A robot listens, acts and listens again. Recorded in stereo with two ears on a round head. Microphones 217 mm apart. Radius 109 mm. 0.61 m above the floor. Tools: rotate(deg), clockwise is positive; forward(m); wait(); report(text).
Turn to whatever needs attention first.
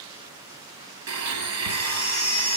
rotate(-25)
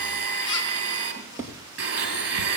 wait()
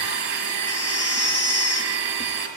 rotate(-130)
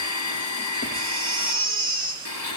rotate(20)
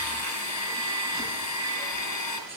wait()
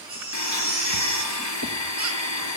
report("Facing the baby crying, 2 to 4 m away.")